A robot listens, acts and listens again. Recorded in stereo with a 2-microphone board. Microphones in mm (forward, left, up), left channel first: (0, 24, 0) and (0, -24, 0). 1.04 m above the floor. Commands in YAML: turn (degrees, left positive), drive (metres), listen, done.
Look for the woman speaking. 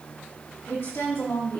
turn: 70
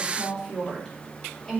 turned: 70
done: "Facing the woman speaking."